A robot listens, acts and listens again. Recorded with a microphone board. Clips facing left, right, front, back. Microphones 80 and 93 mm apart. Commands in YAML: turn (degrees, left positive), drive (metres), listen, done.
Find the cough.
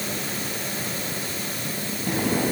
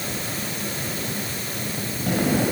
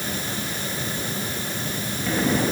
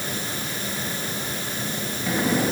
turn: -95
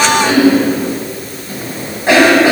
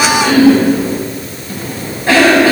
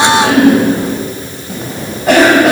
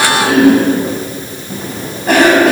turn: 20
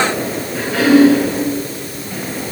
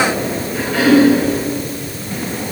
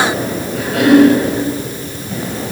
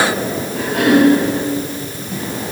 done: "Facing the cough."